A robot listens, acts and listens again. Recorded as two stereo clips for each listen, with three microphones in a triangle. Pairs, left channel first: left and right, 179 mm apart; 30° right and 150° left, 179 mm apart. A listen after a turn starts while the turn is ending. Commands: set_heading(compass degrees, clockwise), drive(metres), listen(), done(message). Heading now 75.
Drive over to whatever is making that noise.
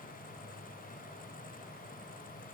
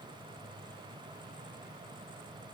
listen()
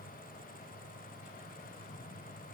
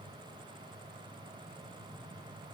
listen()
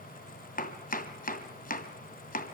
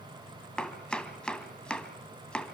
set_heading(20)
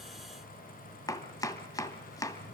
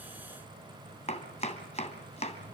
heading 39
set_heading(19)
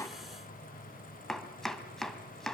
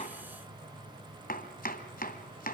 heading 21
drive(1.0)
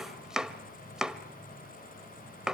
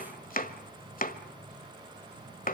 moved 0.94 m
drive(1.0)
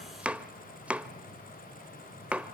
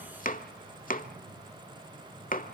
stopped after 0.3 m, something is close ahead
set_heading(31)
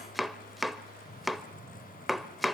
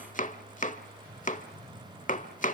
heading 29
done("Arrived at the chopping, straight ahead.")